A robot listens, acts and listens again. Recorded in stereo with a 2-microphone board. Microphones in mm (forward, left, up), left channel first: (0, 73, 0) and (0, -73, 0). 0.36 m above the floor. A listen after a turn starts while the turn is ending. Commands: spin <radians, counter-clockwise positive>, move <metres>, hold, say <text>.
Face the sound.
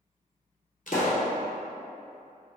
spin 1.13
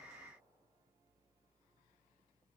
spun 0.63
hold
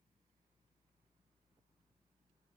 say I heard a pop, but can't make it out now. It was about 30° left or 80° left.